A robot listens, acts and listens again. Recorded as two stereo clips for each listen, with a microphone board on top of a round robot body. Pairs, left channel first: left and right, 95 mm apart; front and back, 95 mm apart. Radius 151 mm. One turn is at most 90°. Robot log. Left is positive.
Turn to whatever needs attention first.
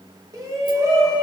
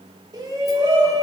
note: The shout: 135° right.
cmd yaw -90
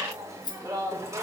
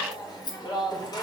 note: The shout is now 35° right.
cmd yaw -35
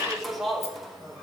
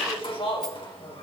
end: Found it: a shout, straight ahead, 2 to 4 m away.